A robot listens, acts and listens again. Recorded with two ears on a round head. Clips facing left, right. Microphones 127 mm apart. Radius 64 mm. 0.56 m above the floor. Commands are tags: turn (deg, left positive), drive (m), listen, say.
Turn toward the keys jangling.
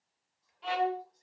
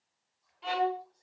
<listen/>
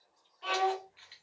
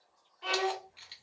<turn deg="-45"/>
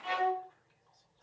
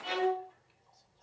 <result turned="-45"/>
<listen/>
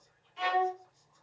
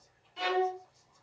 <listen/>
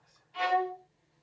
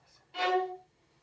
<say>I heard keys jangling, but can't make it out now. It was about straight ahead or 90° right.</say>